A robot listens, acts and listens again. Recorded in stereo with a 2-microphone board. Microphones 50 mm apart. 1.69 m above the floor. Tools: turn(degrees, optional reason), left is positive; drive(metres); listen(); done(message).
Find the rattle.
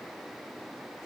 listen()
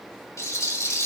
turn(degrees=90)
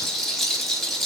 done("Facing the rattle, 2 to 4 m away.")